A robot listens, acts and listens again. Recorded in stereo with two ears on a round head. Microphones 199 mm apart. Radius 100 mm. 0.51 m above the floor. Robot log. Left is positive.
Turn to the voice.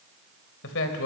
note: The man speaking: about 65° left or 115° left.
cmd yaw +65
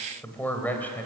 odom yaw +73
note: So it is at 10° left.
cmd yaw +10
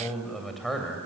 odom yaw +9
end: Found it: a man speaking, straight ahead.